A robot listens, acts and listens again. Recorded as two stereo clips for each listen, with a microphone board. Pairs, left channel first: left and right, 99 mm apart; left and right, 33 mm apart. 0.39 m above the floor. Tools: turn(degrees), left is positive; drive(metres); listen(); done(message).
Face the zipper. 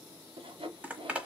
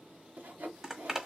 turn(degrees=-30)
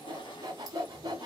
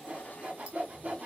listen()
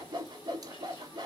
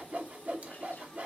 listen()
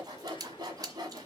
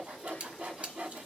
turn(degrees=-135)
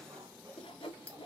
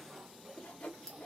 turn(degrees=10)
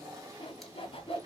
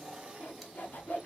listen()
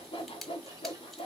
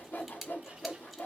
done("Found it: a zipper, straight ahead.")